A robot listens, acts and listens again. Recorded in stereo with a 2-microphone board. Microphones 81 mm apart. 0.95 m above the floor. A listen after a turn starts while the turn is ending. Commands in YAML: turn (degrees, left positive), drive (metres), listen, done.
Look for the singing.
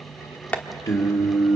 turn: 45
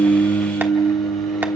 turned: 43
turn: 110
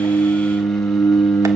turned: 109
turn: 20
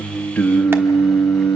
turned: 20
turn: 30
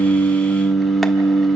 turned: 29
done: "Found it: singing, straight ahead."